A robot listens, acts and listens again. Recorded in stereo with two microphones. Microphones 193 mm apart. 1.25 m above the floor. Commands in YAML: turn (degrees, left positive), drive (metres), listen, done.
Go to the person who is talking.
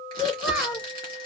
turn: -30
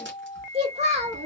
turn: -150
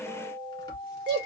turn: -25
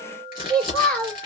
drive: 1.0
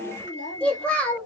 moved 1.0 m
drive: 1.0
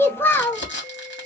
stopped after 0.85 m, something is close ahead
turn: 10
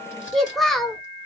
done: "I am next to the child speaking."